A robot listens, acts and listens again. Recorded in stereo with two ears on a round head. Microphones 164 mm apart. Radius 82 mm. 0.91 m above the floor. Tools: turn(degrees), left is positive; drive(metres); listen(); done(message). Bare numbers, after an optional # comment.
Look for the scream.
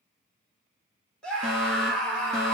turn(30)
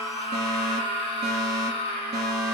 # So it is at 150° left.
turn(150)
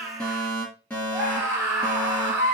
# The scream is now 15° right.
turn(-15)
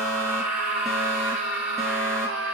done("Facing the scream, 2 to 4 m away.")